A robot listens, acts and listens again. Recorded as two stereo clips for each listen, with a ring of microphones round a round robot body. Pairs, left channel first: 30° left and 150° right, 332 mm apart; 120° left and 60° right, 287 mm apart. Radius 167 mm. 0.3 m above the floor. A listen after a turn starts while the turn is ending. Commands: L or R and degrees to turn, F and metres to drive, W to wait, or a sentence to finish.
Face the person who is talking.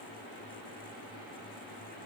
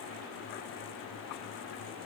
W
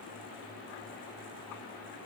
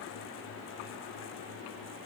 W
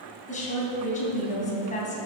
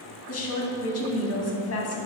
L95
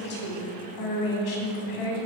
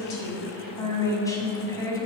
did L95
L45
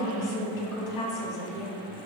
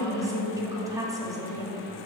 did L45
L15
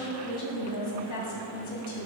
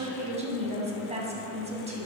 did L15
Found it: a woman speaking, straight ahead.